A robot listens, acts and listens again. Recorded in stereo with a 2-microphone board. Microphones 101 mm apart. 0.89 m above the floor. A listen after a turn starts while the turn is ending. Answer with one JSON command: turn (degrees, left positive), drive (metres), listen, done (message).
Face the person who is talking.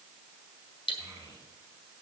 {"turn": -25}
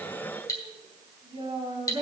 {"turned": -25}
{"turn": -130}
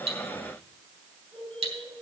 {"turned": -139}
{"turn": 10}
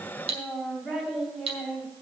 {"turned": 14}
{"done": "Facing the child speaking."}